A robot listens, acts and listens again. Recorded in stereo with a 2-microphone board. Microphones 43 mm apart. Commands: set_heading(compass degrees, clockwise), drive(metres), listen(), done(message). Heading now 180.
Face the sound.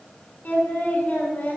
set_heading(140)
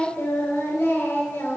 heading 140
set_heading(30)
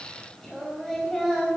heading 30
set_heading(15)
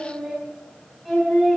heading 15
done("Facing the singing.")